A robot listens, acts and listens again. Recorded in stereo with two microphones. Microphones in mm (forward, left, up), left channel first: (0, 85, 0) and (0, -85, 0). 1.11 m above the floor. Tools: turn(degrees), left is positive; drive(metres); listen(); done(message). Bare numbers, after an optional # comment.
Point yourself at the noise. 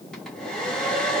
turn(30)
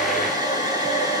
# So it is at 25° right.
turn(-25)
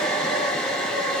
done("Found it: a hair dryer, straight ahead.")